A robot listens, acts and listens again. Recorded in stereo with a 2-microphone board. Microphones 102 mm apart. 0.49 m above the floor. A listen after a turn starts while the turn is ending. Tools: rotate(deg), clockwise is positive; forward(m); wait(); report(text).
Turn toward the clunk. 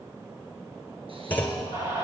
rotate(-20)
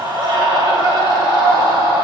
wait()
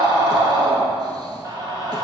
report("I heard a clunk, but can't make it out now. It was about straight ahead or 140° left.")